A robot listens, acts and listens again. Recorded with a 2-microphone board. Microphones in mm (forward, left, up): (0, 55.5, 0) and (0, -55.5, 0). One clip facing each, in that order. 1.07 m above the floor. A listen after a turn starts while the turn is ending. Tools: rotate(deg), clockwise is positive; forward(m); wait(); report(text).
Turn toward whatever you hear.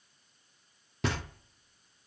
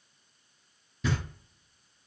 rotate(-75)
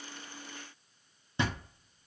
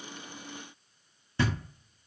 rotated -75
rotate(-20)
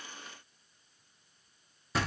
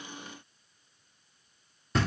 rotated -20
report("Facing the knocking, under 1 m away.")